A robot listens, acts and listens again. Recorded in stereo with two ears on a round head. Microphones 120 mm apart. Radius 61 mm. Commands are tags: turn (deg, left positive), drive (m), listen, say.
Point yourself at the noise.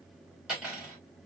<turn deg="-30"/>
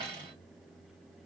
<turn deg="-145"/>
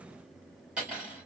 <say>Facing the cutlery clinking, 1 to 2 m away.</say>